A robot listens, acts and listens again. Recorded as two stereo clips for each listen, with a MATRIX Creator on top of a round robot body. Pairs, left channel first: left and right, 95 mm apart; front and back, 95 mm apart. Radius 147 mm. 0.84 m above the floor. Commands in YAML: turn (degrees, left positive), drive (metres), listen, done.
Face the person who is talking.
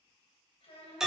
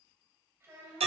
turn: 115
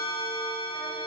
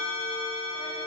listen: true
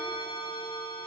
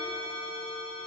listen: true
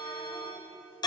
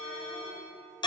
done: "Facing where the child speaking came from. I can't hear it now."